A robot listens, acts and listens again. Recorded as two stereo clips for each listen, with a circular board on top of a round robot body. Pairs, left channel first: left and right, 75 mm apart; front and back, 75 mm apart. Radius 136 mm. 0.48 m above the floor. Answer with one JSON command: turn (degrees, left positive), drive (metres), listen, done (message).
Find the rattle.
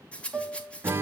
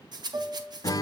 {"turn": 165}
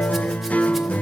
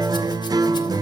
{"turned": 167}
{"listen": true}
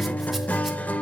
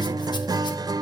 {"listen": true}
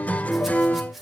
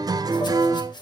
{"done": "Facing the rattle."}